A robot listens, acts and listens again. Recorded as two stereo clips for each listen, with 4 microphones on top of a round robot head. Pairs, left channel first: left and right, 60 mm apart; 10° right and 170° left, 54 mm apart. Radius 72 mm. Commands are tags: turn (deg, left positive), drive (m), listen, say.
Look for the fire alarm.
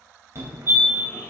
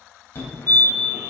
<turn deg="-60"/>
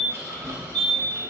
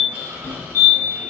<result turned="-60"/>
<turn deg="15"/>
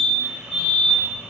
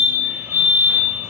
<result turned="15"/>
<say>Facing the fire alarm, 2 to 4 m away.</say>